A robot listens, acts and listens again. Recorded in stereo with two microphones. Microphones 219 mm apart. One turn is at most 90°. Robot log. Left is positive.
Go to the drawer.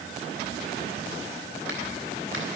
cmd idle
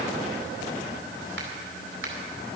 cmd idle
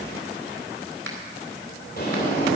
note: The drawer: about 45° left or 135° left.
cmd yaw +45
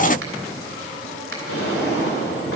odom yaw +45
note: So it is at 85° left.
cmd yaw +85
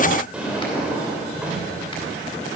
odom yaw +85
cmd fwd 1.0
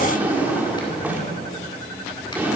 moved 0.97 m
note: The drawer is now 10° right.
cmd yaw -10
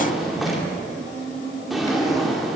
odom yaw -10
cmd fwd 1.0
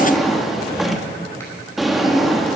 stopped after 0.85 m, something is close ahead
end: I am next to the drawer.